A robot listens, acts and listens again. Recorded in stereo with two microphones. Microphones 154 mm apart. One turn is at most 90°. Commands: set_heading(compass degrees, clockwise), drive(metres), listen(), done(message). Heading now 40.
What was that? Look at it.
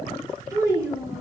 set_heading(65)
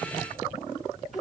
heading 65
done("Facing the child speaking, 2 to 4 m away.")